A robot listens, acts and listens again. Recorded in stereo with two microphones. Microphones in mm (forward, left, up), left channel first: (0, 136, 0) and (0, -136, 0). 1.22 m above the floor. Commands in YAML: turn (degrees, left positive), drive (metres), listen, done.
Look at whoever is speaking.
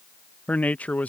turn: 30
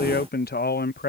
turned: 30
turn: 145
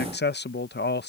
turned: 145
turn: 40
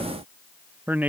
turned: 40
done: "Found it: a man speaking, straight ahead."